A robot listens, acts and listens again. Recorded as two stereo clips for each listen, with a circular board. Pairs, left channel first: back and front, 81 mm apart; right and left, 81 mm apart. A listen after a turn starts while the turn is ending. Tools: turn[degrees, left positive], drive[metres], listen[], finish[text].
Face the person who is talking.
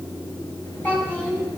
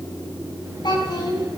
Thought: The child speaking: 115° right.
Action: turn[-115]
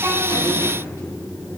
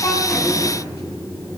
Action: listen[]
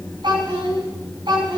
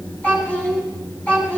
Thought: The child speaking is now 15° right.
Action: turn[-15]
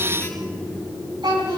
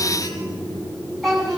Action: finish[Facing the child speaking, over 4 m away.]